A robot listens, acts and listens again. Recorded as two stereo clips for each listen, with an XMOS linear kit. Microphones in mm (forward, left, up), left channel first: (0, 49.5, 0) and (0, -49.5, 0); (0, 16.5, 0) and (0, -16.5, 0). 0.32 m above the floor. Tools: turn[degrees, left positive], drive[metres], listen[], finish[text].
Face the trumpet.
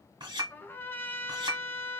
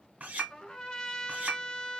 Thought: The trumpet: about 20° left or 160° left.
Action: turn[20]
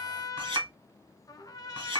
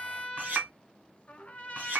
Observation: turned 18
Thought: So it is at 140° left.
Action: turn[140]
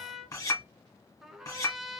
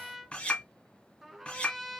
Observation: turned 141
Action: finish[Found it: a trumpet, straight ahead.]